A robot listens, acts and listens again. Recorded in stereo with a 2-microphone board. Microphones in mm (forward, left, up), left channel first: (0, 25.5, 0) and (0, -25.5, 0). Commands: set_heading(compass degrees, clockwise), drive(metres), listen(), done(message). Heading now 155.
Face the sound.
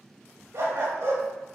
set_heading(220)
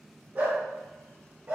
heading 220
set_heading(265)
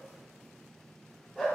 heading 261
done("Facing the dog barking, over 4 m away.")